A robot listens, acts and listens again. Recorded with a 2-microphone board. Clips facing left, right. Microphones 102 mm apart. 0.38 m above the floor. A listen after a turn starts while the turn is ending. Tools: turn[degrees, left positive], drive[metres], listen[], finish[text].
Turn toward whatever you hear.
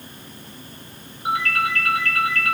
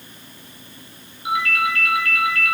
Thought: The ringtone: about 40° left or 140° left.
Action: turn[40]
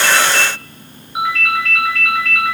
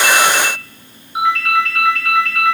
Action: finish[Facing the ringtone.]